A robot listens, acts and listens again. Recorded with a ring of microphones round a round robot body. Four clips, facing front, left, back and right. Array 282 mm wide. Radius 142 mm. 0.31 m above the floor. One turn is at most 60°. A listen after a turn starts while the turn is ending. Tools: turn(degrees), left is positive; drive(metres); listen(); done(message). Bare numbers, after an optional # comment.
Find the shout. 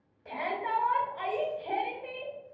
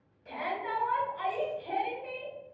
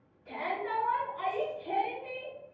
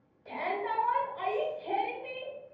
# The shout: 20° right.
turn(-20)
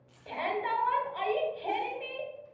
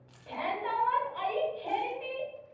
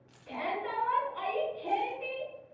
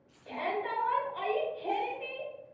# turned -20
done("Facing the shout, 2 to 4 m away.")